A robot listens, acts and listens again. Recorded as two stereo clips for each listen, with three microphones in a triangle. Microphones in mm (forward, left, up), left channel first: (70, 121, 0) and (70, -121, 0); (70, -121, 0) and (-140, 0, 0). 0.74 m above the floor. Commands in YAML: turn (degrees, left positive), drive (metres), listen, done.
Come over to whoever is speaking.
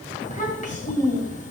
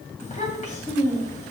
turn: 30
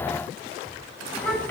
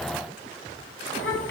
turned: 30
drive: 1.0
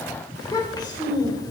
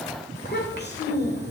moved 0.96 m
turn: 15
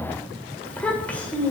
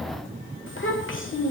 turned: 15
drive: 1.0
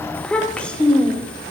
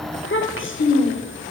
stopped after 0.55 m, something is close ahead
done: "Arrived at the child speaking, straight ahead."